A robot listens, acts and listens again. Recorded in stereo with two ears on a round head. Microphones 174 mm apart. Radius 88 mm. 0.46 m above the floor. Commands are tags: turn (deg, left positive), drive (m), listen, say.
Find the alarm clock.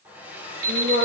<turn deg="-45"/>
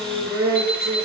<say>Facing the alarm clock, over 4 m away.</say>